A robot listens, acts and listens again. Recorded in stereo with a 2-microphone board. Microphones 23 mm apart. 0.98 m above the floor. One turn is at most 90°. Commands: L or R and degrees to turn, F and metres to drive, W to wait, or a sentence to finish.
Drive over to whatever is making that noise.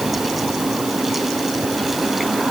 W
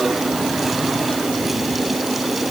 W
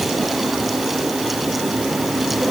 I can't make out anything.